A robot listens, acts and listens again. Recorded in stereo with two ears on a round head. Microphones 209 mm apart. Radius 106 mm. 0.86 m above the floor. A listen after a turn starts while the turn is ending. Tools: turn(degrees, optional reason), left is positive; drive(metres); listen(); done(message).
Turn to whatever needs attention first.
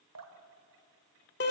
listen()
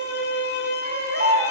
turn(degrees=-30, reason="The baby crying: about 30° right or 150° right.")
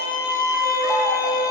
listen()
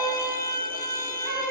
listen()
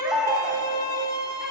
done("Facing the baby crying, 2 to 4 m away.")